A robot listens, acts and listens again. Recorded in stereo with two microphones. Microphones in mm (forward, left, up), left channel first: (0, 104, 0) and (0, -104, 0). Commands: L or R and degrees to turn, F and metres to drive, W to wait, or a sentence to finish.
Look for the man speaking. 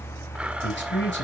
L55
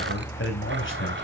L65
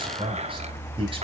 R25
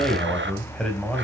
Facing the man speaking, over 4 m away.